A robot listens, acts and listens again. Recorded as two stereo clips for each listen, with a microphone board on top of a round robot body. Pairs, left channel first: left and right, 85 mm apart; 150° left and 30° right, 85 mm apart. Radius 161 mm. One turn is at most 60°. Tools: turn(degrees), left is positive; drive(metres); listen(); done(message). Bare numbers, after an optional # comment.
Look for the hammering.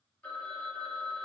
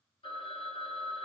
listen()
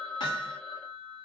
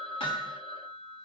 # The hammering: 130° left.
turn(60)
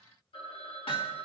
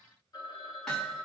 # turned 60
# The hammering is now 65° left.
turn(60)
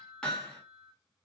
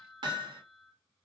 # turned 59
# The hammering is now 10° left.
turn(10)
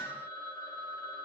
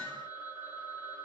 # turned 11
done("Found it: hammering, straight ahead.")